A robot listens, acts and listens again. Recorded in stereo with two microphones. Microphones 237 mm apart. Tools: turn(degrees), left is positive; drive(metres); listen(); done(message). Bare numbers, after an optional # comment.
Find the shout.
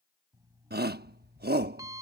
# The shout: about 45° right or 135° right.
turn(-45)
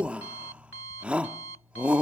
done("Facing the shout.")